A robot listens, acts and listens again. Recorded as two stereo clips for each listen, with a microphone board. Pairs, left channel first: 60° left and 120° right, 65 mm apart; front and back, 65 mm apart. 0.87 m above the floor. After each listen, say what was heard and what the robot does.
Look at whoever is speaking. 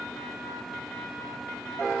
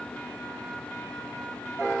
Keep listening.
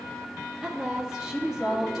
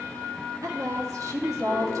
The woman speaking: 160° left. Turn 160° left.
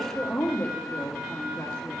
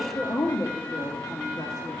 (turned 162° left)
Found it: a woman speaking, straight ahead, 1 to 2 m away.